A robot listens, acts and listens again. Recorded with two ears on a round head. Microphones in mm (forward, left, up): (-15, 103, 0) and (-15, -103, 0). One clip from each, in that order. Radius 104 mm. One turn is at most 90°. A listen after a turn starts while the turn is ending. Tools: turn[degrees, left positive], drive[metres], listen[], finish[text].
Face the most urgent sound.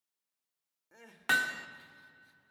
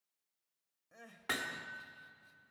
Thought: The crying: about 20° left or 160° left.
Action: turn[20]
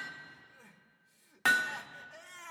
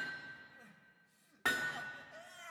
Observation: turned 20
Thought: So it is at 135° left.
Action: turn[90]
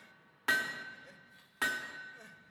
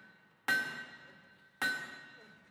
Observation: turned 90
Thought: The crying is now 40° left.
Action: turn[40]
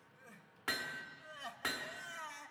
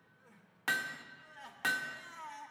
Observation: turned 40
Thought: The crying is now 10° left.
Action: turn[10]
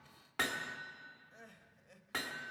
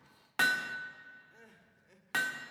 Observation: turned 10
Action: finish[Facing the crying, 1 to 2 m away.]